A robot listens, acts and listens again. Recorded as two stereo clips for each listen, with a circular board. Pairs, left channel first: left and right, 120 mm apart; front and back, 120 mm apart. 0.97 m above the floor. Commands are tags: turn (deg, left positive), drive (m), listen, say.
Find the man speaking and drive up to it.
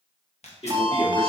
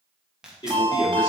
<turn deg="50"/>
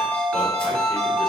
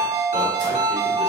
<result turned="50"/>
<listen/>
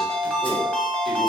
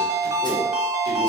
<listen/>
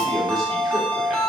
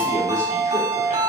<say>Facing where the man speaking came from. I can't hear it now. I did not reach it.</say>